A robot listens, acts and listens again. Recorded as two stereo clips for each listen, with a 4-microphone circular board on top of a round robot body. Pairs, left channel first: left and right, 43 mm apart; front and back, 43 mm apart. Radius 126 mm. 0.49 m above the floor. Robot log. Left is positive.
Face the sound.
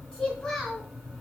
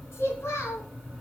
note: The child speaking: 10° left.
cmd yaw +10
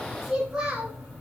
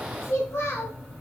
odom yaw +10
note: The child speaking is now 20° right.
cmd yaw -20
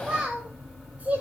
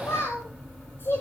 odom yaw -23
note: The child speaking is now 35° right.
cmd yaw -35
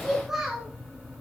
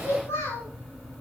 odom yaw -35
note: The child speaking is now 20° right.
cmd yaw -20
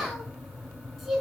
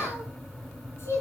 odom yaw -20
note: The child speaking is now 15° right.
cmd yaw -15
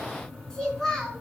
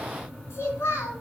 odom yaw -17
end: Found it: a child speaking, straight ahead.